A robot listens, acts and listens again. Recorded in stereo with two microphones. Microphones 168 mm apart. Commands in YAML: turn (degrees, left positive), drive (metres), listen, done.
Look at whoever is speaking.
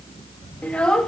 turn: 30
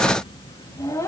turn: 165
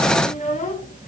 turn: 50
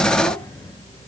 listen: true
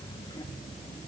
listen: true
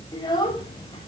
turn: 25
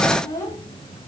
turn: 15
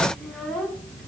done: "Found it: a child speaking, straight ahead."